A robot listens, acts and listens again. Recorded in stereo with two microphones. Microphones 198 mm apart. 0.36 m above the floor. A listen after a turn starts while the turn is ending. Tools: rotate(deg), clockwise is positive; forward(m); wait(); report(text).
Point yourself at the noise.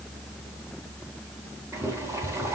rotate(30)
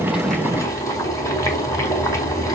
rotate(-15)
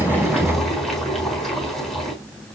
report("Found it: boiling, straight ahead, over 4 m away.")